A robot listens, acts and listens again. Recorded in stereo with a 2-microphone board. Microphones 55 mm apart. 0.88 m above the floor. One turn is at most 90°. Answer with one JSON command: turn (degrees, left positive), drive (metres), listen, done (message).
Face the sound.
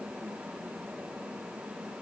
{"listen": true}
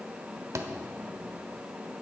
{"turn": -65}
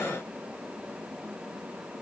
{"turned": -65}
{"listen": true}
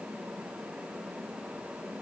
{"done": "I heard a thud, but can't make it out now. It was about straight ahead or 50° right."}